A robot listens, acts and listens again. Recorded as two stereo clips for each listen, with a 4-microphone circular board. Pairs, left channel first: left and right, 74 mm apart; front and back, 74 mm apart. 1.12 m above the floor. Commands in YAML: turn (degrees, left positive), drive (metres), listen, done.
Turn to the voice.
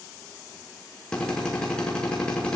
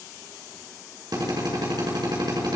listen: true
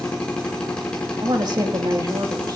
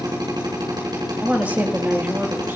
turn: -115
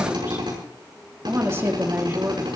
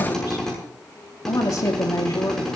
turn: -35
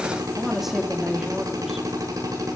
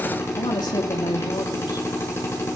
done: "Facing the woman speaking."